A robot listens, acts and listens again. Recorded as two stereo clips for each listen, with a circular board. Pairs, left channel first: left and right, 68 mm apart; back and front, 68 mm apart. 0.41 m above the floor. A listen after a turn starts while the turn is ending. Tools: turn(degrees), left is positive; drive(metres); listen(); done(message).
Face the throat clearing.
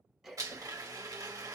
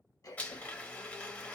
turn(degrees=-175)
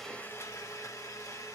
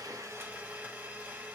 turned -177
listen()
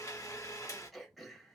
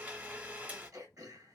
done("Found it: throat clearing, straight ahead, 1 to 2 m away.")